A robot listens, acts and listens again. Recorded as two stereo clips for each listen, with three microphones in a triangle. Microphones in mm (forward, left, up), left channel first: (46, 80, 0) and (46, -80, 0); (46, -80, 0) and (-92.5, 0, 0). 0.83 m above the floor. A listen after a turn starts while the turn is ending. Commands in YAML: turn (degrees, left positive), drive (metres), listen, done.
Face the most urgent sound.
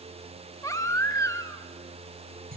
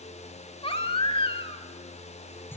turn: 20
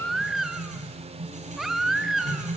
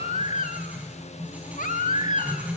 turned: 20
done: "Found it: a baby crying, straight ahead, 1 to 2 m away."